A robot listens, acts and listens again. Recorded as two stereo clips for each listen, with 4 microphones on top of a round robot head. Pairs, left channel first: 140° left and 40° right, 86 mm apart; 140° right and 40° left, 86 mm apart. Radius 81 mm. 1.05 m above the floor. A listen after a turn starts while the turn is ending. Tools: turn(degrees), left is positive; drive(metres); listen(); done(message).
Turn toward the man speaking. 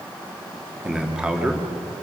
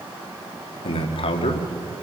turn(degrees=-120)
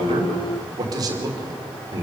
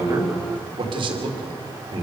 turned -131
turn(degrees=10)
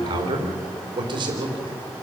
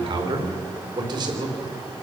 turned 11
done("Found it: a man speaking, straight ahead.")